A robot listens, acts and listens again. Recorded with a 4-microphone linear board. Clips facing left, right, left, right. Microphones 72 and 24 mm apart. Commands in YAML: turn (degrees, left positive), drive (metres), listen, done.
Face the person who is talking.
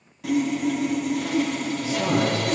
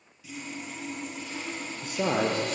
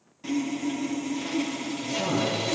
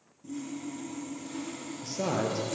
turn: -55
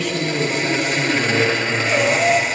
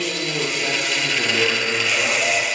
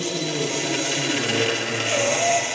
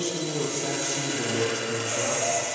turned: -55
done: "Facing the man speaking, over 4 m away."